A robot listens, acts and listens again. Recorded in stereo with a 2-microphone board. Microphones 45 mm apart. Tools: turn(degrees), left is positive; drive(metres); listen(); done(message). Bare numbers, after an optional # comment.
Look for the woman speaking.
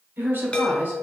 # The woman speaking: about 55° right or 125° right.
turn(-55)
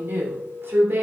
# So it is at 65° right.
turn(-65)
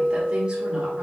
# The woman speaking is now 25° right.
turn(-25)
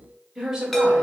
# The woman speaking is now 15° right.
turn(-15)
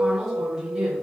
# The woman speaking is now 10° right.
turn(-10)
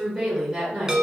# The woman speaking is now 10° right.
turn(-10)
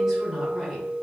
done("Facing the woman speaking, 2 to 4 m away.")